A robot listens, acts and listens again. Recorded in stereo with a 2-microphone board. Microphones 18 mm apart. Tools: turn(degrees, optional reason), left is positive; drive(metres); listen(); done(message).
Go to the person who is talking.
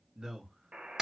turn(degrees=-40, reason="The man speaking: about 40° right or 140° right.")
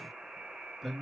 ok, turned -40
drive(metres=1.0)
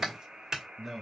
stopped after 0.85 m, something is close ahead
turn(degrees=-20, reason="The man speaking is now 20° right.")
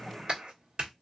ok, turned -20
listen()
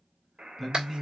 done("Arrived at the man speaking, straight ahead.")